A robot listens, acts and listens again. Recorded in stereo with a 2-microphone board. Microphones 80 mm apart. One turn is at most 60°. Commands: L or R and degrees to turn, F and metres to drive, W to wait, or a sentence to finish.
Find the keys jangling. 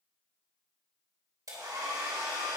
W
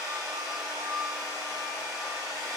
W
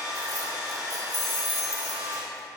L60
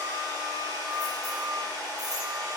W
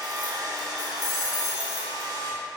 L40
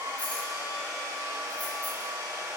W
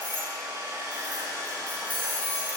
L20
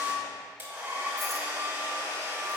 W
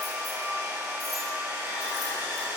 W
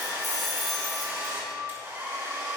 Facing the keys jangling, 2 to 4 m away.